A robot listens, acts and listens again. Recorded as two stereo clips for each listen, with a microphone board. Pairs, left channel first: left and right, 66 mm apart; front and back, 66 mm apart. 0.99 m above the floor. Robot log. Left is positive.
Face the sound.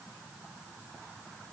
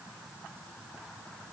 cmd idle
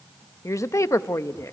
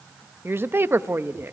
note: The woman speaking: 130° left.
cmd yaw +130
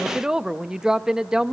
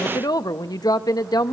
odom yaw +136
note: The woman speaking is now 10° right.
cmd yaw -10
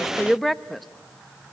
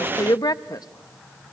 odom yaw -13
end: Facing the woman speaking, under 1 m away.